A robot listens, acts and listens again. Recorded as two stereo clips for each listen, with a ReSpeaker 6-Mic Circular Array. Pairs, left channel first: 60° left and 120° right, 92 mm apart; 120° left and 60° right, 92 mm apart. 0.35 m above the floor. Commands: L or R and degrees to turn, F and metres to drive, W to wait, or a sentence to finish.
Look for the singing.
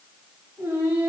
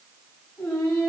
L175
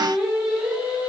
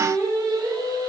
R50
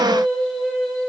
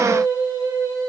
R30
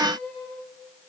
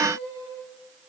R30
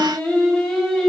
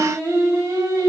R25
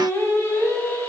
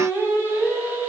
Facing the singing.